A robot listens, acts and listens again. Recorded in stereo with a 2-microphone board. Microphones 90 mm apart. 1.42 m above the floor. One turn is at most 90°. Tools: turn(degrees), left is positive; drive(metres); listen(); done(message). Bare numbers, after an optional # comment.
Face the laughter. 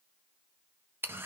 listen()
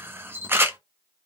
listen()
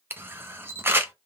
done("I can't make out laughter to turn to.")